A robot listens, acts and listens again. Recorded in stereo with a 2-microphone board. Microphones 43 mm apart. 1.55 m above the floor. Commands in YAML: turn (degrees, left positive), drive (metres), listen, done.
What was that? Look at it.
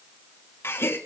turn: 70
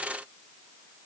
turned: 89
listen: true
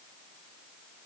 done: "I heard a gasp, but can't make it out now. It was about 20° right or 20° left."